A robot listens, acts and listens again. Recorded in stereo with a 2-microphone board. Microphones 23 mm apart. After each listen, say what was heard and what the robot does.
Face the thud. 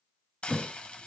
The thud: about 30° right or 150° right. Turn 30° right.
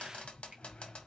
Keep listening.
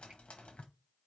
I heard a thud, but can't make it out now. It was about straight ahead or 120° right.